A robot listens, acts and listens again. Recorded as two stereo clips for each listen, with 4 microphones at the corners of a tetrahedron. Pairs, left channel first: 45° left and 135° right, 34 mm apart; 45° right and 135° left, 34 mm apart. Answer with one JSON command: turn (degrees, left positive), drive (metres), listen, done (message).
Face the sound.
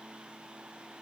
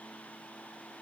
{"listen": true}
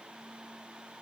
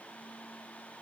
{"listen": true}
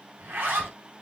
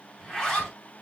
{"turn": -115}
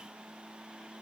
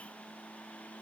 {"listen": true}
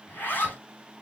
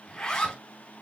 {"turn": 25}
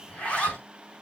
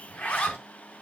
{"turn": -10}
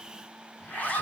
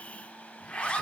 {"done": "Found it: a zipper, straight ahead, over 4 m away."}